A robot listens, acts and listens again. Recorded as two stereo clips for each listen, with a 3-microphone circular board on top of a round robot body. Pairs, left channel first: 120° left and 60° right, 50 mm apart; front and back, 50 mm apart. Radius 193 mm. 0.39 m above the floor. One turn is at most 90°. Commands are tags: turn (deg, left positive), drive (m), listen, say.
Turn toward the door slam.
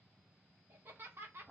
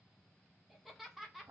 <listen/>
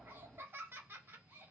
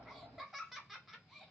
<listen/>
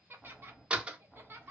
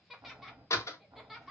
<say>Found it: a door slam, straight ahead, 1 to 2 m away.</say>